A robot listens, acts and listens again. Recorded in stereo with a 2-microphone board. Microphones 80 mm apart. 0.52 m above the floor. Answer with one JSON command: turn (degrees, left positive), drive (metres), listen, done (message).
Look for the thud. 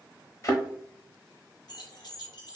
{"turn": 45}
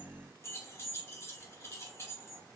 {"listen": true}
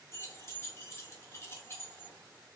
{"done": "I heard a thud, but can't make it out now. It was about straight ahead or 90° left."}